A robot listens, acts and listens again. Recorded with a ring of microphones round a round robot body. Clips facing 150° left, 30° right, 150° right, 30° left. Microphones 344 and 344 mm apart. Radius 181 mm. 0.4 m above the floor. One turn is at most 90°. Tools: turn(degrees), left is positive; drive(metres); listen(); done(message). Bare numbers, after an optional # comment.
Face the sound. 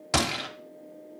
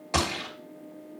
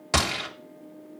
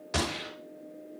# The gunshot: 155° right.
turn(-90)
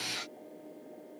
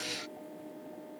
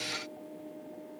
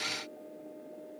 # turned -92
# Nothing new. It was at 65° right.
turn(-65)
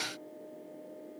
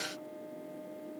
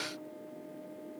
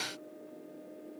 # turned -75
# Nothing new. It was at 10° left.
turn(10)
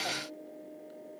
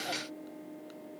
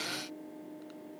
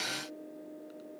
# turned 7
done("I heard a gunshot from this way, but can't make it out now.")